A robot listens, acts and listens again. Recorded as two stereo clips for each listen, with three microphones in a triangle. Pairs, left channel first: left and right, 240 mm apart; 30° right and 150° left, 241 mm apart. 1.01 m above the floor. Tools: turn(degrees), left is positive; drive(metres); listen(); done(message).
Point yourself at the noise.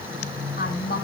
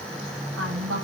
turn(degrees=135)
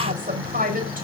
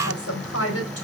turn(degrees=-35)
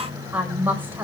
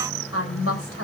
turn(degrees=-10)
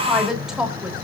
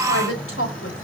done("Facing the woman speaking.")